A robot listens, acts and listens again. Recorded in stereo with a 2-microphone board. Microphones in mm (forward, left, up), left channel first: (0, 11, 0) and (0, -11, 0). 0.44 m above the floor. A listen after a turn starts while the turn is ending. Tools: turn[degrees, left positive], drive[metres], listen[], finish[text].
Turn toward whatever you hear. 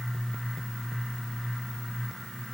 Action: listen[]
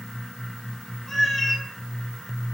Action: turn[30]
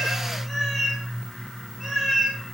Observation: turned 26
Action: turn[-30]
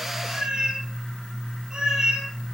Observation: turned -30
Thought: So it is at 140° right.
Action: turn[-140]
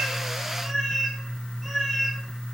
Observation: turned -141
Action: finish[Found it: a cat meowing, straight ahead, 2 to 4 m away.]